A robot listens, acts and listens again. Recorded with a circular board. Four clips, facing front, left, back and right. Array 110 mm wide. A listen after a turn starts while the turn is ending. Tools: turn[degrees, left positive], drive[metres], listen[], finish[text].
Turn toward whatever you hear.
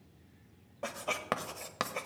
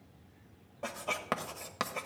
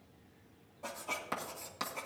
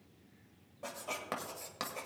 Thought: The writing: 30° left.
Action: turn[30]
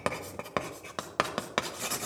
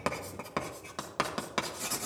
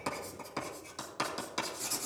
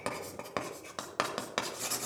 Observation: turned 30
Action: finish[Facing the writing.]